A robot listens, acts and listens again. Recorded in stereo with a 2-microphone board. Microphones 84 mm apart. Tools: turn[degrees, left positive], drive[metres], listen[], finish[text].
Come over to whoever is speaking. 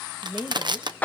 Thought: The woman speaking: about 15° right or 165° right.
Action: turn[-15]
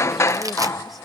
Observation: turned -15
Action: listen[]
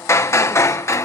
Action: listen[]
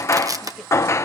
Action: finish[I heard a woman speaking, but can't make it out now. It was about straight ahead or 150° right. I did not reach it.]